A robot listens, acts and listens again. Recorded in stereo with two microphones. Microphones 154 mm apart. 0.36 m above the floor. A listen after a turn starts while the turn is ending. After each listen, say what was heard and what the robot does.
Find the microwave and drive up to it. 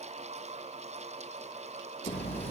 Keep listening.
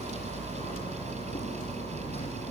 Keep listening.
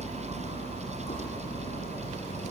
I can't make out a microwave, only hammering.